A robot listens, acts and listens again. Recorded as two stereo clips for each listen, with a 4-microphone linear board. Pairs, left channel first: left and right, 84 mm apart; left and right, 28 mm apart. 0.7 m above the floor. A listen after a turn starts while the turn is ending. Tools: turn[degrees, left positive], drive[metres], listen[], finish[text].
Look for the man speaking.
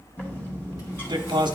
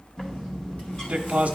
Thought: The man speaking: about 60° right or 120° right.
Action: turn[-60]
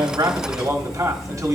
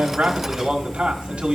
Thought: So it is at 45° right.
Action: turn[-45]
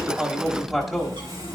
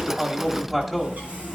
Action: finish[Found it: a man speaking, straight ahead, 1 to 2 m away.]